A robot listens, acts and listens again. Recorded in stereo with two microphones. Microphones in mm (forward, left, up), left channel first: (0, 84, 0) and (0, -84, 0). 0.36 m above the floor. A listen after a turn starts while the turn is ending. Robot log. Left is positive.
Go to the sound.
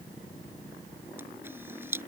cmd yaw -30
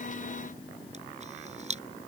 note: So it is at 135° right.
cmd yaw -135
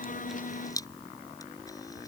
note: The camera shutter is now 20° left.
cmd yaw +20
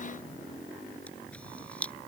note: The camera shutter is now 10° left.
cmd yaw +10
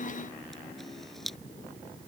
cmd fwd 1.0
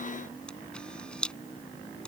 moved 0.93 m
cmd fwd 1.0
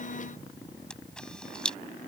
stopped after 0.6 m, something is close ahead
end: I am next to the camera shutter.